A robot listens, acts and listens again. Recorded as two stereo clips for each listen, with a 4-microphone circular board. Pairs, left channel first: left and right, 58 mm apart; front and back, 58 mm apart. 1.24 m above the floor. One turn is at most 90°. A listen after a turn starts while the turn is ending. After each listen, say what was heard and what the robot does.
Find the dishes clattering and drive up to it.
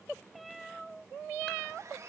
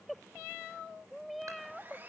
Keep listening.
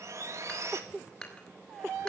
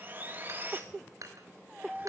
The dishes clattering: 165° left. Turn 90° left.
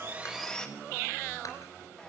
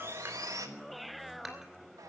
Nothing new. It was at 75° left. Turn 75° left.
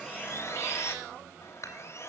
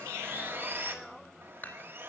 The dishes clattering is now 55° left. Turn 55° left.
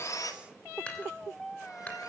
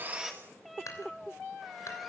The dishes clattering is now 15° left. Turn 15° left.
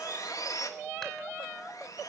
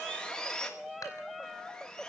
Keep listening.
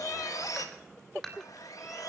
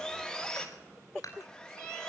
Drive 1.0 m forward.
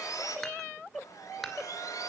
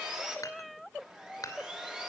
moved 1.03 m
Drive 1.0 m forward.
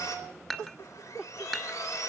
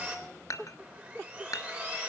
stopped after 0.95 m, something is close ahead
I am next to the dishes clattering.